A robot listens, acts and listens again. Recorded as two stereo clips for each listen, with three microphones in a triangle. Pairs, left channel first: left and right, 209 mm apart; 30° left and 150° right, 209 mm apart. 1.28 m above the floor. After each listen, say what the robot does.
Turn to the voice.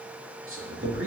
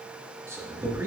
Turn 70° right.
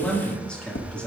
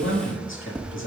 Found it: a man speaking, straight ahead, 2 to 4 m away.